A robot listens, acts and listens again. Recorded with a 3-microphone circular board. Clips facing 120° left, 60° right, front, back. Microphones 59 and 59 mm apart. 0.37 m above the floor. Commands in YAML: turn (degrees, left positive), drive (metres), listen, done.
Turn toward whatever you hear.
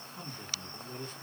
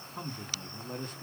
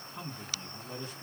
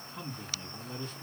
turn: -80
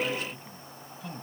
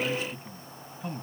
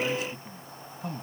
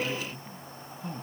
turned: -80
done: "Found it: a man speaking, straight ahead."